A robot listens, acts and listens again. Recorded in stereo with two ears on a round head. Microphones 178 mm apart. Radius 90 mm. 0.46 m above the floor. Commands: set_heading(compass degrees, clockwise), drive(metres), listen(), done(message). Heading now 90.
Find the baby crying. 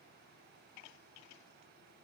listen()
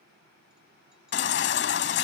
set_heading(35)
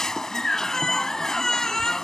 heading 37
done("Found it: a baby crying, straight ahead.")